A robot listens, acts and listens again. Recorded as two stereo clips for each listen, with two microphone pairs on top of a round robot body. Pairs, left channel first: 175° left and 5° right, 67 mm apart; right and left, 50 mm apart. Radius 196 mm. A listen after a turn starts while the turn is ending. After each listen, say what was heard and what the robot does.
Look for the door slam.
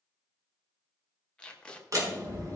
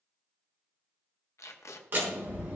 The door slam: 35° left. Turn 35° left.
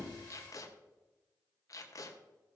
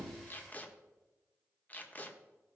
Facing where the door slam came from. I can't hear it now.